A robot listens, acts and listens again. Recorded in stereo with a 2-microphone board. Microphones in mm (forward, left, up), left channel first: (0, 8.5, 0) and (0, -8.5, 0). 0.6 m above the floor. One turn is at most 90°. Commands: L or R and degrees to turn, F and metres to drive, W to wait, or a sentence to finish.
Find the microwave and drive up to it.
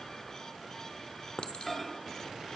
L30
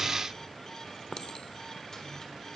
W
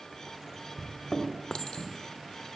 L90
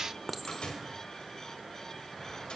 L85
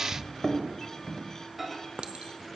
F1.0
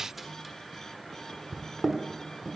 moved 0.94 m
R10
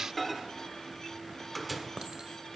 F1.0
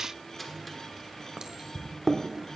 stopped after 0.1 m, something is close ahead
Arrived at the microwave, straight ahead.